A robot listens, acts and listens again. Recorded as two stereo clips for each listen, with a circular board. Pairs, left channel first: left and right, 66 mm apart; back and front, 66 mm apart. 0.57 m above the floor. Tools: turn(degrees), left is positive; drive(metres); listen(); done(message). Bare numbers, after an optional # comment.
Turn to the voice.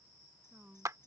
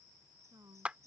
# The woman speaking: 30° right.
turn(-30)
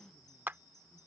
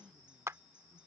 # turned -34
listen()
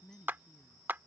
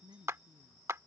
done("Found it: a woman speaking, straight ahead.")